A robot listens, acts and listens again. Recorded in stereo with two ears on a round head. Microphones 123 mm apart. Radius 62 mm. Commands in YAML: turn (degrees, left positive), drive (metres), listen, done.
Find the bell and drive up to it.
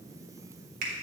listen: true
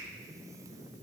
listen: true
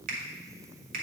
done: "I can't make out a bell, only a finger snap."